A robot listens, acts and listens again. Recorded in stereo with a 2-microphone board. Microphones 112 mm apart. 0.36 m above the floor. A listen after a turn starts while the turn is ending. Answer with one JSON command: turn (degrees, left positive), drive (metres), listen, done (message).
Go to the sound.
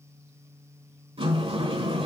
{"turn": -55}
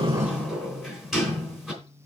{"drive": 1.0}
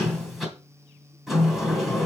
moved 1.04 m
{"drive": 1.0}
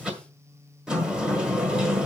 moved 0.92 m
{"turn": -10}
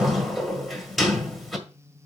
{"drive": 1.0}
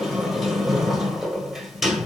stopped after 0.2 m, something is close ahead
{"done": "Arrived at the sliding door, straight ahead."}